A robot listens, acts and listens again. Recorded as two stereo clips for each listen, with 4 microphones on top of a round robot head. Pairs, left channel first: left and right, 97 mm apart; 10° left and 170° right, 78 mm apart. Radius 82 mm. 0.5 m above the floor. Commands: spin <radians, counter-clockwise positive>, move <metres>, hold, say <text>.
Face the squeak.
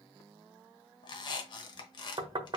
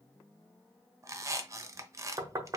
spin 2.44
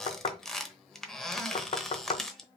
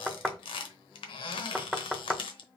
say Facing the squeak, under 1 m away.